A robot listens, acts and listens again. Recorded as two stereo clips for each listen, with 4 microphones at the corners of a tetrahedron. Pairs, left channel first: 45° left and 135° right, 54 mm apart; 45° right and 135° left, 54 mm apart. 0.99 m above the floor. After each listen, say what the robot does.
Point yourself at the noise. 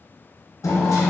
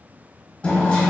Turn 25° left.
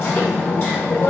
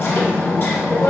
Found it: hammering, straight ahead, under 1 m away.